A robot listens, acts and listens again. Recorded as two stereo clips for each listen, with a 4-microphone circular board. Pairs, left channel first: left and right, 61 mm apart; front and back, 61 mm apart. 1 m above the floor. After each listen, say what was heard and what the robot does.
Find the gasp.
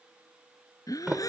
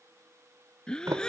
The gasp: 75° left. Turn 75° left.
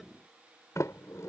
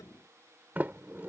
Facing where the gasp came from. I can't hear it now.